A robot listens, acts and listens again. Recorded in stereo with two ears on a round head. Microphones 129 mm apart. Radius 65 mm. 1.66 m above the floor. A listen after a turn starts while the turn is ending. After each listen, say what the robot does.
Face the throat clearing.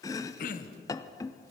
Turn 65° left.
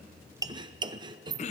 Turn 50° left.
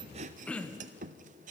Turn 10° left.
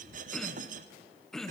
Facing the throat clearing.